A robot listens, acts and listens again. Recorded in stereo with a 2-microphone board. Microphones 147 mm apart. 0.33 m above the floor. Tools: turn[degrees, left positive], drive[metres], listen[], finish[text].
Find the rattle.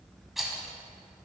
Action: turn[30]
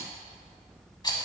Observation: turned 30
Thought: So it is at 150° left.
Action: turn[150]
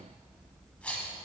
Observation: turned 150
Thought: The rattle is now 10° left.
Action: turn[10]
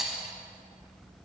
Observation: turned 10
Action: finish[Found it: a rattle, straight ahead.]